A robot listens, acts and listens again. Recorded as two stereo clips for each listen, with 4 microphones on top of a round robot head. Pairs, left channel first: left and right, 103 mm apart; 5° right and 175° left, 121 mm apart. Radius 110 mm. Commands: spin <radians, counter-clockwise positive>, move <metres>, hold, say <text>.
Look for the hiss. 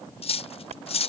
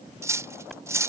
spin -1.66
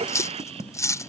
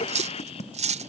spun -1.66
spin -0.96
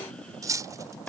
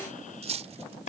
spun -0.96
spin 0.17
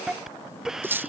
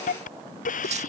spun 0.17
say Found it: a hiss, straight ahead.